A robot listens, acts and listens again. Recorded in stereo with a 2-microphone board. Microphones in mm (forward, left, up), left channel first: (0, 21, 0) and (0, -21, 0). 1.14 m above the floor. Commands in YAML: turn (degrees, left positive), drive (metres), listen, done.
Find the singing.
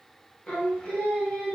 turn: 25
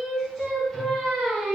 done: "Found it: singing, straight ahead, 1 to 2 m away."